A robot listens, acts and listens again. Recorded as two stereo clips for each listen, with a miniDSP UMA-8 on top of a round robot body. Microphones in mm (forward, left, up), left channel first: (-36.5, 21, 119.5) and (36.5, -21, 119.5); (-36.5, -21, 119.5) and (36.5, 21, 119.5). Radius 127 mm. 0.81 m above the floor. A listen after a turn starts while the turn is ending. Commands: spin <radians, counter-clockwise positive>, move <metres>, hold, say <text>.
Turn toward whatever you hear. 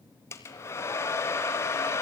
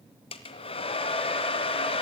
spin -2.62
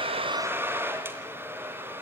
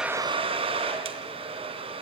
spin 0.61
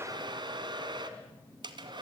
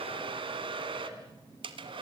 say Found it: a hair dryer, straight ahead.